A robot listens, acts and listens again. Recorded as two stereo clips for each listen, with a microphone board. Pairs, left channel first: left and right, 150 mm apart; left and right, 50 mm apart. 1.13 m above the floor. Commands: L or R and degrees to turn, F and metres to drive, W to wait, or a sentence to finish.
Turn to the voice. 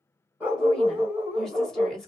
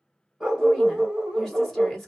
L30
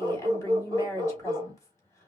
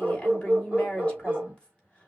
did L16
L160
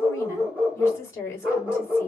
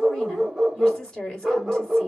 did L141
L20
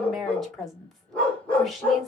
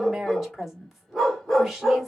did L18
Facing the woman speaking.